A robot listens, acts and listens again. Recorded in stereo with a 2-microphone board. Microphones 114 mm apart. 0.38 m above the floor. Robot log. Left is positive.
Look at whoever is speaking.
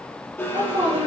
note: The woman speaking: about 50° right or 130° right.
cmd yaw -50
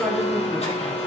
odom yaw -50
end: Found it: a woman speaking, straight ahead.